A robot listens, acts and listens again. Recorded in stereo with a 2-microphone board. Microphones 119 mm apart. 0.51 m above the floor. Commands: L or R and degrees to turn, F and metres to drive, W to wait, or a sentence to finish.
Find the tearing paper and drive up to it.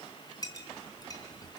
W
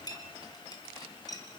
W
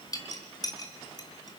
I can't make out tearing paper, only a clink.